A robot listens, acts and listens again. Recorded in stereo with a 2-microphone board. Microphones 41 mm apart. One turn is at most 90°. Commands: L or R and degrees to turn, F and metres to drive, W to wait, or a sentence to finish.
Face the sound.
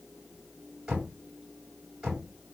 R30
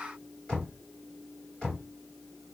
L20
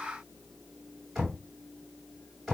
Found it: knocking, straight ahead, 2 to 4 m away.